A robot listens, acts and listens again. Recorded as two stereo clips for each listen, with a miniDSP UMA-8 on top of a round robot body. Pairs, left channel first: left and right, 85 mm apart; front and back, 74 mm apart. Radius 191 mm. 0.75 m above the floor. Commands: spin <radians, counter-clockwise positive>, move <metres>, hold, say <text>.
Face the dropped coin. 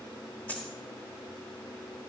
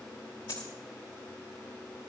spin 0.35
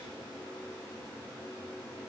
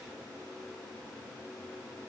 say I heard a dropped coin from this way, but can't make it out now.